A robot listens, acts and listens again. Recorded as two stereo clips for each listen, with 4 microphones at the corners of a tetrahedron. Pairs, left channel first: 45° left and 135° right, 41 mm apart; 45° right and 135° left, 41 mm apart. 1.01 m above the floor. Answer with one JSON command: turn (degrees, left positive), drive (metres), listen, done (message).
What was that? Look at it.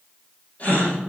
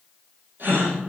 {"turn": 100}
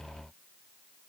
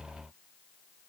{"done": "I heard a gasp from this way, but can't make it out now."}